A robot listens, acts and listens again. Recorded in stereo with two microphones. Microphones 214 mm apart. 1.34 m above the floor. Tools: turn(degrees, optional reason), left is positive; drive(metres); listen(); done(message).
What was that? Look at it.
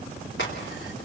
turn(degrees=60, reason="The crack: about 60° left or 120° left.")
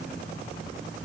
listen()
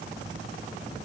done("I heard a crack, but can't make it out now. It was about straight ahead or 60° left.")